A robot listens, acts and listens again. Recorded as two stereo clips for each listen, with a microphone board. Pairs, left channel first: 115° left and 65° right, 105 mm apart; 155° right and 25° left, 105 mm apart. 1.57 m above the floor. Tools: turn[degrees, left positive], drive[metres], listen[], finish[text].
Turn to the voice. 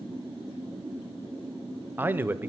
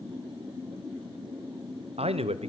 Action: finish[Found it: a man speaking, straight ahead, under 1 m away.]